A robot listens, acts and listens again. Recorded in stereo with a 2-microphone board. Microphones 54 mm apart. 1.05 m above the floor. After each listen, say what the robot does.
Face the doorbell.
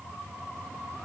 Keep listening.
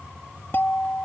Turn 40° left.
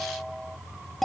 Found it: a doorbell, straight ahead.